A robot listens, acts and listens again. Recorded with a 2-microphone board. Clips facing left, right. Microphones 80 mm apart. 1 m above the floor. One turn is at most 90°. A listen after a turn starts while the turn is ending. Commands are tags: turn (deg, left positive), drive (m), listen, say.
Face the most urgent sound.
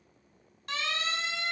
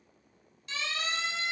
<turn deg="55"/>
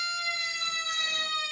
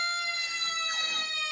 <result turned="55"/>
<turn deg="65"/>
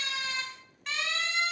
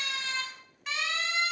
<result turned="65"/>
<say>Found it: a siren, straight ahead, over 4 m away.</say>